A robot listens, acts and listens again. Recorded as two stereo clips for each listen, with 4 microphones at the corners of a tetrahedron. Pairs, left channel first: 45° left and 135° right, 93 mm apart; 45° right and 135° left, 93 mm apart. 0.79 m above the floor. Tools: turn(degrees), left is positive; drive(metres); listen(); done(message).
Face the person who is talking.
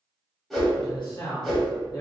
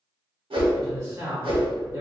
turn(degrees=80)
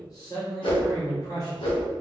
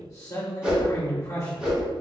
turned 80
done("Facing the man speaking.")